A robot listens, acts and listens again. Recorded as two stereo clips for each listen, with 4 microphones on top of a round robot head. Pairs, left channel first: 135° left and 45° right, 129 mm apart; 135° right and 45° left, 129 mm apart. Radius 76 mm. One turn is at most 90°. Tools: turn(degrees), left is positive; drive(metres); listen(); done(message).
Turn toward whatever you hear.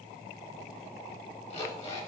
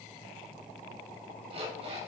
turn(degrees=90)
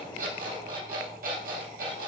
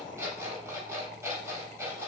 turn(degrees=-25)
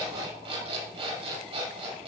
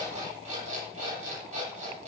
done("Found it: an alarm clock, straight ahead.")